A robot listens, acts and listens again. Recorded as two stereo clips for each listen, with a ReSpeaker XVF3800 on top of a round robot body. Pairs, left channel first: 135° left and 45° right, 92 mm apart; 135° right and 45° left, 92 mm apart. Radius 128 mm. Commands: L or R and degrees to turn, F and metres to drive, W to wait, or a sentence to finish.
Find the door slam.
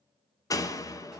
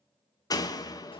R175
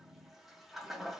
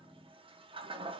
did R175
Facing where the door slam came from. I can't hear it now.